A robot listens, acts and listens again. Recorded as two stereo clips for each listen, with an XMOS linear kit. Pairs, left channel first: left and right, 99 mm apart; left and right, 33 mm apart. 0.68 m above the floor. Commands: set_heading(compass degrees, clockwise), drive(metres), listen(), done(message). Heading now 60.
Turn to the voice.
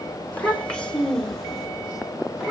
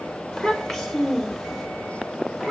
set_heading(90)
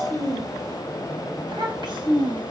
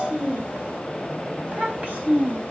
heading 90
set_heading(215)
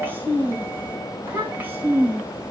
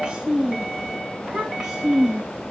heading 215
set_heading(230)
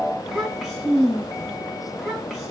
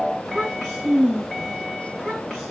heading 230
done("Found it: a child speaking, straight ahead, over 4 m away.")